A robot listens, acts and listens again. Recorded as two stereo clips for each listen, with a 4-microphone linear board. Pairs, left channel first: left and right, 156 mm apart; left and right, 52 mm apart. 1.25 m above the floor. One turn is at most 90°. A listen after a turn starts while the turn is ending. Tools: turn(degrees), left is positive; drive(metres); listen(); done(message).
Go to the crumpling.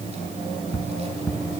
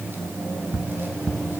listen()
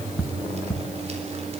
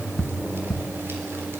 listen()
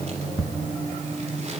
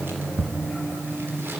done("I can't make out crumpling to turn to.")